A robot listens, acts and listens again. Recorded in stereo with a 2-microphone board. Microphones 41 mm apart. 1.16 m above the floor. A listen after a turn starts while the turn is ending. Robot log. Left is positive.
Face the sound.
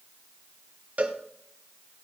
note: The cowbell: about 40° right or 140° right.
cmd yaw -40
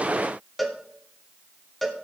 end: Facing the cowbell, 1 to 2 m away.